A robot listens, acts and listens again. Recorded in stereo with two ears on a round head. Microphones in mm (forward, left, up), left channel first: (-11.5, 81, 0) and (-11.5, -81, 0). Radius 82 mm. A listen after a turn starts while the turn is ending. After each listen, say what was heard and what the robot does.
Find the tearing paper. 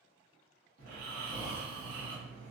Keep listening.
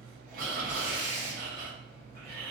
The tearing paper: about 25° right or 155° right. Turn 25° right.
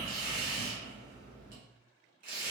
So it is at 130° right. Turn 130° right.
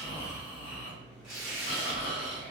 Found it: tearing paper, straight ahead, 1 to 2 m away.